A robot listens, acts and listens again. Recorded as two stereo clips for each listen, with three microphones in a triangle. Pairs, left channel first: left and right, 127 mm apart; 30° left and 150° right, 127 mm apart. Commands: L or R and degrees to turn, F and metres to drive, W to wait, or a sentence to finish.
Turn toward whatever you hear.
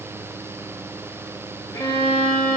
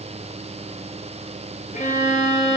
L30
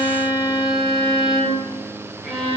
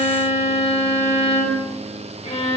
Facing the violin.